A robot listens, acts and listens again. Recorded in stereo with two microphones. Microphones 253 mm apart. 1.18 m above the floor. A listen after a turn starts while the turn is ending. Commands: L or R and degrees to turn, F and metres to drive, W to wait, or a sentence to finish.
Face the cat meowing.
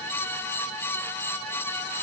W
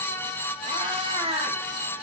R25
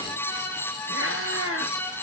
R120
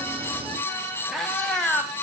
Found it: a cat meowing, straight ahead.